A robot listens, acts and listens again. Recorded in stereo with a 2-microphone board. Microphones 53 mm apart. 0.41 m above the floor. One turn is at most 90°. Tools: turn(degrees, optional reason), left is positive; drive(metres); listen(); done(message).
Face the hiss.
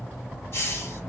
turn(degrees=50, reason="The hiss: about 50° left or 130° left.")
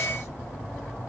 listen()
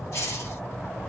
turn(degrees=70, reason="So it is at 70° left.")
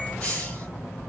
turn(degrees=25, reason="The hiss is now 25° left.")
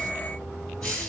turn(degrees=15, reason="The hiss is now 15° left.")
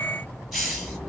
done("Facing the hiss, 1 to 2 m away.")